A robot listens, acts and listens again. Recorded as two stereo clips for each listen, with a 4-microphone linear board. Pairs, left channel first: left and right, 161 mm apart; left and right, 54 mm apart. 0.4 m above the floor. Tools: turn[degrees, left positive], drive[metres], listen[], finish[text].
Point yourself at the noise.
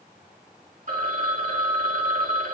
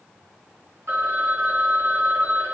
Thought: The phone ringing: about 55° right or 125° right.
Action: turn[-55]
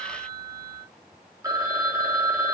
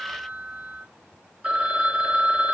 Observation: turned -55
Thought: So it is at 25° right.
Action: turn[-25]
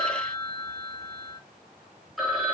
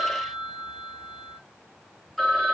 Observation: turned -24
Action: finish[Facing the phone ringing.]